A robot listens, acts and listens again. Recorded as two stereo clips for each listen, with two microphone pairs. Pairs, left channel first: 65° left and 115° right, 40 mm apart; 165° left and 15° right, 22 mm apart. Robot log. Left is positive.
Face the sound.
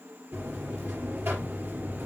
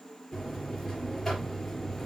note: The buzzer: 115° right.
cmd yaw -115
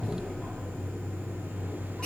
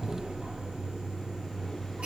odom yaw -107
note: The buzzer is now 10° right.
cmd yaw -10
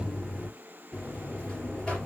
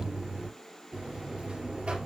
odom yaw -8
end: Found it: a buzzer, straight ahead, 2 to 4 m away.